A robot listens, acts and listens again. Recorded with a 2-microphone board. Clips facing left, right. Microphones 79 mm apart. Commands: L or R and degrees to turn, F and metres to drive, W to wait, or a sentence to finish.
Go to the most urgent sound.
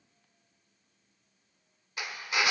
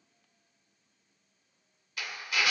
W
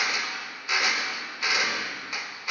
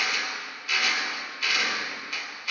W
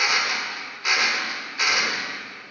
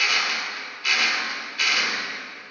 I can't make out anything urgent to turn to.